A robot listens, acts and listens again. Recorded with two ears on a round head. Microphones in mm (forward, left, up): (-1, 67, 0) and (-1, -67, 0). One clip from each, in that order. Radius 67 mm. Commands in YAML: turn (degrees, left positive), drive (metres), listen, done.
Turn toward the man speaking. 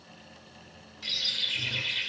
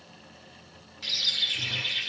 listen: true
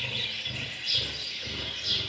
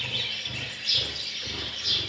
listen: true
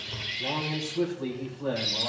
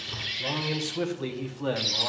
turn: -70
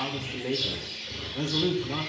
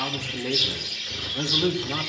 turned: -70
turn: -35
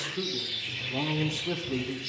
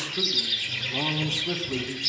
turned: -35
done: "Facing the man speaking."